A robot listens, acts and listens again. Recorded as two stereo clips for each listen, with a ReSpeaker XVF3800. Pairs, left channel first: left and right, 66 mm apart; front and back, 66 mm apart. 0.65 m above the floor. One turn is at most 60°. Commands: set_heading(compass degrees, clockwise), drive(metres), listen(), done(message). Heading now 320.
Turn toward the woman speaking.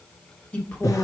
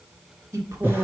set_heading(260)
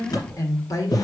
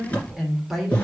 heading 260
set_heading(200)
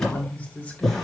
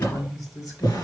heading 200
set_heading(175)
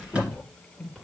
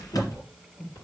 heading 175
done("Found it: a woman speaking, straight ahead, 2 to 4 m away.")